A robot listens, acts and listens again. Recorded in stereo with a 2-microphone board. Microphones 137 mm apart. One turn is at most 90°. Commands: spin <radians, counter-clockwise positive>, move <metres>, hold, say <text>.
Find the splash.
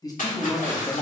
spin 1.22
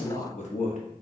hold
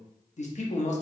say I heard a splash, but can't make it out now. It was about straight ahead or 40° left.